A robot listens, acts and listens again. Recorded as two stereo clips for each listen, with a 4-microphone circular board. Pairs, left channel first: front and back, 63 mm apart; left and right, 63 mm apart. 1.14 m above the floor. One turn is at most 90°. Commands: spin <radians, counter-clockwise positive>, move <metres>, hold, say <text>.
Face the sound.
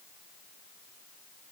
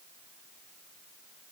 hold
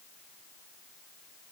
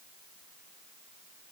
hold
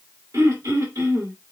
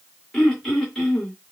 spin 1.57
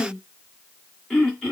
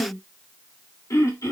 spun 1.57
spin 1.48
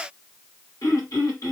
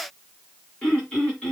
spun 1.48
spin 0.35
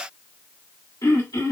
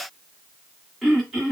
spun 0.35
say Found it: throat clearing, straight ahead.